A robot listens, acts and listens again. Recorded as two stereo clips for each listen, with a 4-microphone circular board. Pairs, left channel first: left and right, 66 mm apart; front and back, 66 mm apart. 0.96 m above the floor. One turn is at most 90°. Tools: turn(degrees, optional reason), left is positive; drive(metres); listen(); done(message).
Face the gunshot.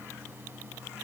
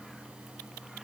listen()
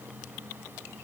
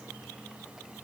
listen()
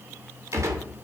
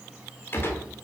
turn(degrees=-55, reason="The gunshot: 55° right.")
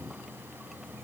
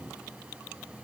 done("Facing where the gunshot came from. I can't hear it now.")